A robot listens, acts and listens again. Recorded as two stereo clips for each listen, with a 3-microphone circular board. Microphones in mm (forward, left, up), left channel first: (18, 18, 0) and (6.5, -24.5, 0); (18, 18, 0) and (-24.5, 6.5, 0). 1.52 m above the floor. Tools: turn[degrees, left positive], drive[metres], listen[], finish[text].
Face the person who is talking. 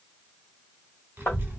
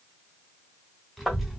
Thought: The child speaking: 80° right.
Action: turn[-80]
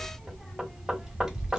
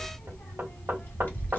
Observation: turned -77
Thought: The child speaking is now 35° right.
Action: turn[-35]
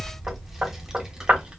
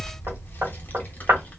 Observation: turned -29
Thought: The child speaking is now 40° right.
Action: turn[-40]
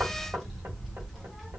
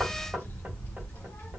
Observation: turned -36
Thought: The child speaking is now 15° right.
Action: turn[-15]
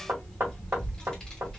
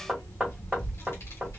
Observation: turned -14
Action: finish[Found it: a child speaking, straight ahead, 1 to 2 m away.]